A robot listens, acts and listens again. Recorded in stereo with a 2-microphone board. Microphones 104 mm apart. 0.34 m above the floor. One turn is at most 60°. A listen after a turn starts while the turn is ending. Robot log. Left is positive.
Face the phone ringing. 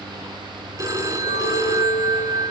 note: The phone ringing: about 35° right or 145° right.
cmd yaw -35
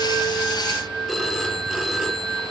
end: Found it: a phone ringing, straight ahead, 2 to 4 m away.